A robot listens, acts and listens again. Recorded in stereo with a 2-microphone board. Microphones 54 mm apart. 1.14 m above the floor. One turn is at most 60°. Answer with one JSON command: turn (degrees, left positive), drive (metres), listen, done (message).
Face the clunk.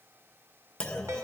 {"turn": 30}
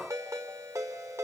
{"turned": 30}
{"listen": true}
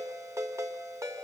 {"done": "I heard a clunk, but can't make it out now. It was about 15° right or 135° left."}